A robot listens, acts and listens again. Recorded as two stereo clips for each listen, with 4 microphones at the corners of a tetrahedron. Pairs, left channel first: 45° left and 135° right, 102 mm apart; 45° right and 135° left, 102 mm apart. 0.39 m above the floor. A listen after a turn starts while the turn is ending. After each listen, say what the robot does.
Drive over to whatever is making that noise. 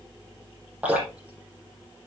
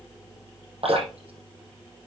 Turn 145° left.
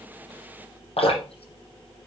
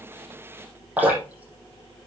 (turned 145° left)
Turn 60° left.
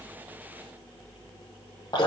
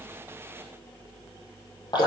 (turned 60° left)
Drive 1.0 m forward.
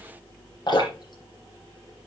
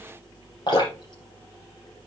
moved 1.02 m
Drive 1.0 m forward.
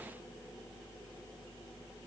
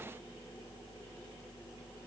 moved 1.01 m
Keep listening.
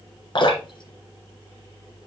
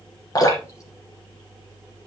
Turn 10° left.
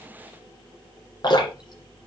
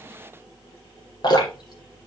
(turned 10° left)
Drive 1.0 m forward.
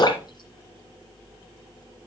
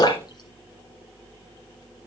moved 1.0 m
Drive 1.0 m forward.
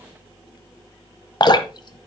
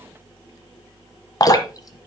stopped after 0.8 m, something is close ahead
Arrived at the dripping, straight ahead.